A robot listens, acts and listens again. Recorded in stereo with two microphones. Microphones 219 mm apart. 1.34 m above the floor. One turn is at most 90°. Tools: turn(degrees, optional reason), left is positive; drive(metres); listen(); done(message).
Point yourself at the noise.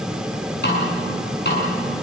turn(degrees=50, reason="The snare drum: about 50° left or 130° left.")
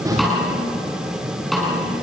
done("Found it: a snare drum, straight ahead.")